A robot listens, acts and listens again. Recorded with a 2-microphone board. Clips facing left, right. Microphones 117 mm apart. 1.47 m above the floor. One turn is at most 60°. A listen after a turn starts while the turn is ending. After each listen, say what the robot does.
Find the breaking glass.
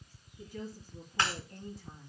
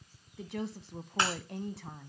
Turn 20° right.
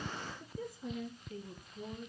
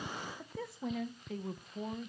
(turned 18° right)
Keep listening.
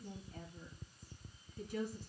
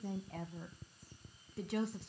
I heard breaking glass, but can't make it out now. It was about straight ahead or 140° right.